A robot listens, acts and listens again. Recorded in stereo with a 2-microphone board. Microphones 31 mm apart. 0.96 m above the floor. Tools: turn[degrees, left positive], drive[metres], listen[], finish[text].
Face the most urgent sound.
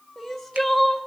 Action: turn[30]
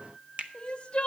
Thought: So it is at 140° left.
Action: turn[140]
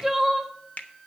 Thought: The crying is now 10° right.
Action: turn[-10]
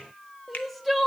Action: finish[Facing the crying.]